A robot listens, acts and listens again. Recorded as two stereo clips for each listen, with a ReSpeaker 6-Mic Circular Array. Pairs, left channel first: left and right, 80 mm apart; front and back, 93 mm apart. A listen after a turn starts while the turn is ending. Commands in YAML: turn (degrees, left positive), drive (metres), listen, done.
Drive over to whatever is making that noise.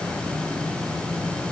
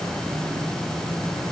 listen: true
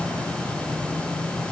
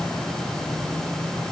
listen: true
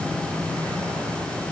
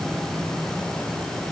done: "I can't make out anything to turn to."